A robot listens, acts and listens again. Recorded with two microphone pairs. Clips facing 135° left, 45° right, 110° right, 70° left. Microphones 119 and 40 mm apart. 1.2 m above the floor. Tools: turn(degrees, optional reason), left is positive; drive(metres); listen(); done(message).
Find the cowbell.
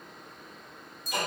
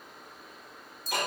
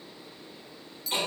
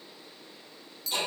listen()
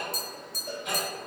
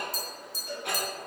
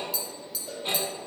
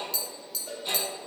turn(degrees=90, reason="The cowbell: 90° left.")
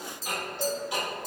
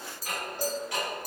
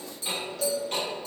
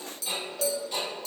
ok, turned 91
done("Found it: a cowbell, straight ahead, 1 to 2 m away.")